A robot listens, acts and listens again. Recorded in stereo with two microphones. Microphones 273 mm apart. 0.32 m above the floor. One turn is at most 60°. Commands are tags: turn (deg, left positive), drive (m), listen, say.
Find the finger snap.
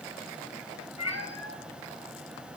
<listen/>
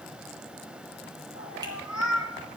<listen/>
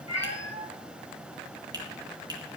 <turn deg="-30"/>
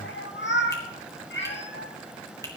<listen/>
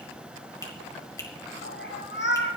<turn deg="15"/>
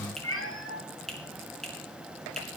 <say>Facing the finger snap.</say>